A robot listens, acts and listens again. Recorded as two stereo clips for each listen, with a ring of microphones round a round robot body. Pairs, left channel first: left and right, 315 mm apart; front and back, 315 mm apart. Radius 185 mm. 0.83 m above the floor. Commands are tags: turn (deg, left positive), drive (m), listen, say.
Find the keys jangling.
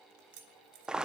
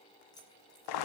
<turn deg="-80"/>
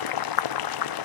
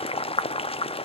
<listen/>
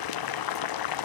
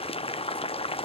<listen/>
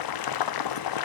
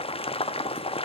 <say>I heard keys jangling from this way, but can't make it out now.</say>